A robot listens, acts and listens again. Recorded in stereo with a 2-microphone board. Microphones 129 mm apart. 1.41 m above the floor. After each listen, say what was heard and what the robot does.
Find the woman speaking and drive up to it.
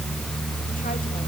Keep listening.
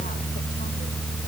Keep listening.
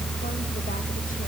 I can't make out a woman speaking.